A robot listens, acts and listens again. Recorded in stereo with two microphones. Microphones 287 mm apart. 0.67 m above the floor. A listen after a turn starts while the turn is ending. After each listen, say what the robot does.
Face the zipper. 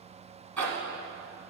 Turn 70° right.
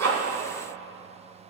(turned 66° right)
Keep listening.
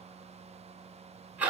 Facing the zipper, 1 to 2 m away.